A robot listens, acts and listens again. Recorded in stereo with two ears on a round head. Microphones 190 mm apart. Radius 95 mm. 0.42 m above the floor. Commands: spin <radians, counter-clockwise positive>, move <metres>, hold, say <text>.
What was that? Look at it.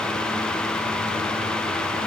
hold
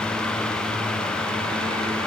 hold
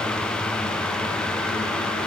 say I can't make out anything to turn to.